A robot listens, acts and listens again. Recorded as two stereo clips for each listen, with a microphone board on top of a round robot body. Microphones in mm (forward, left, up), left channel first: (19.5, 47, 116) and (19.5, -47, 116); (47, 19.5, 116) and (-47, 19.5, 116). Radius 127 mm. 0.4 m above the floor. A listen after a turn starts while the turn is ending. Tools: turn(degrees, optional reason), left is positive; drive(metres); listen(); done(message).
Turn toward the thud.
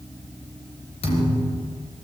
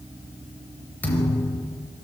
turn(degrees=75, reason="The thud: 75° left.")
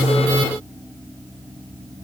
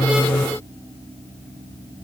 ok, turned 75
done("Facing where the thud came from. I can't hear it now.")